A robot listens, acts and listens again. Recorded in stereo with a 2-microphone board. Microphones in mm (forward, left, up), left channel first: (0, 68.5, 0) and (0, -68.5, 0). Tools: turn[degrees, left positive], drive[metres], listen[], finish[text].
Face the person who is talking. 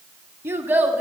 Action: turn[-30]
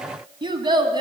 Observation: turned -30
Thought: So it is at 150° right.
Action: turn[-150]
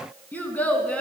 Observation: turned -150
Thought: The child speaking is now 10° left.
Action: turn[10]
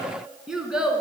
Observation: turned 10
Action: finish[Facing the child speaking, 2 to 4 m away.]